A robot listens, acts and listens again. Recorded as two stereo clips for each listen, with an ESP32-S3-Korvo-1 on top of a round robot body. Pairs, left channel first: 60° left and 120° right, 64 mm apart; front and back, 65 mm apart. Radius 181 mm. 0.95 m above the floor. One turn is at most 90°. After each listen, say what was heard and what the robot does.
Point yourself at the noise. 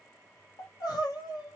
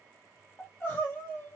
The crying: 60° left. Turn 60° left.
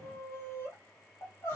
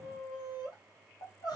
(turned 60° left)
Facing the crying, 1 to 2 m away.